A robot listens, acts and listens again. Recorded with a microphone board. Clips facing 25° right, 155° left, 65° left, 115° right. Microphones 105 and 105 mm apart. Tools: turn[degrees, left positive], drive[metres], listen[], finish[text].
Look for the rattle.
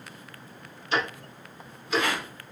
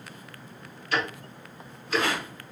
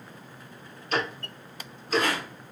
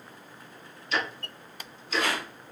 Thought: The rattle: 105° left.
Action: turn[105]
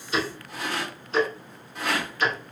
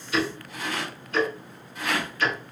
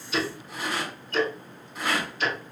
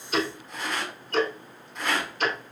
Thought: The rattle is now 15° right.
Action: turn[-15]
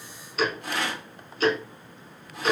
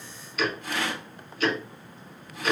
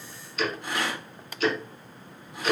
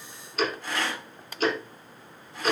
Action: finish[Facing the rattle, 1 to 2 m away.]